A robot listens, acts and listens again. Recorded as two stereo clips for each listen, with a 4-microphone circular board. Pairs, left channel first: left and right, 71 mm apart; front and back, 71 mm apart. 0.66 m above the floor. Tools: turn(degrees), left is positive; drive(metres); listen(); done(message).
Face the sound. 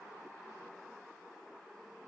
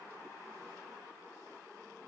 listen()
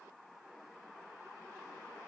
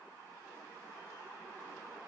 listen()
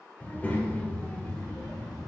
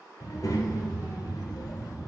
turn(degrees=10)
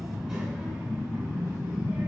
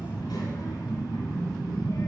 turn(degrees=-15)
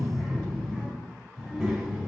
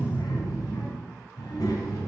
done("Facing the child speaking, 2 to 4 m away.")